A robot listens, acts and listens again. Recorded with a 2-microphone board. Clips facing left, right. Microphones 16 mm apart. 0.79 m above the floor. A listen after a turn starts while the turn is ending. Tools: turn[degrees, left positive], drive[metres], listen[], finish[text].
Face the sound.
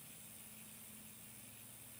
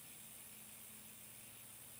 Action: listen[]
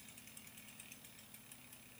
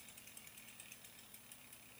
Action: listen[]
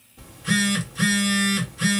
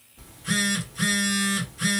Action: turn[30]
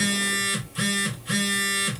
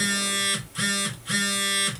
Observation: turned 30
Thought: So it is at 15° right.
Action: turn[-15]
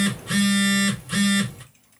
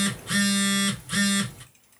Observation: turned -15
Action: finish[Found it: a phone buzzing, straight ahead, 1 to 2 m away.]